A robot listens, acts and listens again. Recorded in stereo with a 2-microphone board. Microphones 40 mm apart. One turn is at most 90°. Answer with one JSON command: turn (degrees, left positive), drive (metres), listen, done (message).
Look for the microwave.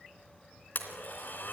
{"listen": true}
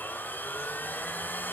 {"listen": true}
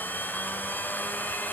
{"done": "I can't make out a microwave, only a blender."}